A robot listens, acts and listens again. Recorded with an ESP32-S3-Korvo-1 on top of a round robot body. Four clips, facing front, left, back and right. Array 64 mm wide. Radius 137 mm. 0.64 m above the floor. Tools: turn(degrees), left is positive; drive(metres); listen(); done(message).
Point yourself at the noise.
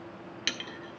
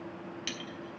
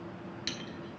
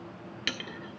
turn(degrees=-65)
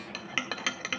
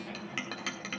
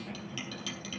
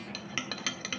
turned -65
done("Facing the clink.")